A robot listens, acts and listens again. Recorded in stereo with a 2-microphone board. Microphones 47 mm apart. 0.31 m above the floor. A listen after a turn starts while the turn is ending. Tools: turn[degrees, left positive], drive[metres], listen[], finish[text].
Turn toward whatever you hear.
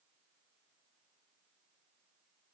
Action: listen[]
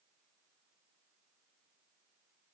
Action: listen[]
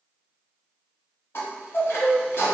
Thought: The chime: about 55° left or 125° left.
Action: turn[55]
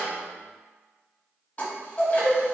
Thought: So it is at 40° left.
Action: turn[40]
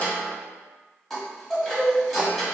Action: finish[Facing the chime, 1 to 2 m away.]